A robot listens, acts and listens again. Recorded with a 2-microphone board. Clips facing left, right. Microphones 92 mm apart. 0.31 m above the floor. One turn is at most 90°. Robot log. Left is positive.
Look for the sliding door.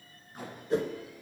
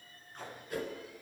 cmd idle
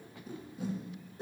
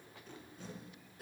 cmd idle
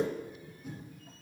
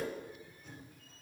end: I can't make out a sliding door to turn to.